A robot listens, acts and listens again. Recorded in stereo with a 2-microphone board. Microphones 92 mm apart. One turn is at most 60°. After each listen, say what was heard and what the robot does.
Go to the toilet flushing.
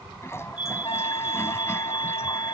The toilet flushing: about 30° left or 150° left. Turn 30° left.
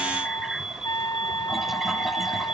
Keep listening.
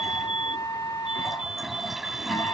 Drive 1.0 m forward.
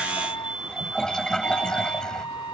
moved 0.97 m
The toilet flushing is now 10° left. Turn 10° left.
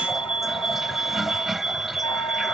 Drive 1.0 m forward.
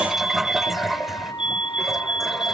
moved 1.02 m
Drive 1.0 m forward.
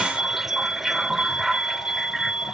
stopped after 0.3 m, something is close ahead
Arrived at the toilet flushing, straight ahead.